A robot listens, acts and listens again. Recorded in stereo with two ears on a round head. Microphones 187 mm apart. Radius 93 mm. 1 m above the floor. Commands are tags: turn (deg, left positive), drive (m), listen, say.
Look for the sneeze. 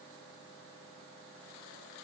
<listen/>
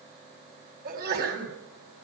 <turn deg="-50"/>
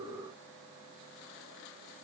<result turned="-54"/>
<listen/>
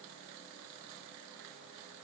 <say>I heard a sneeze, but can't make it out now. It was about 5° left or 80° right.</say>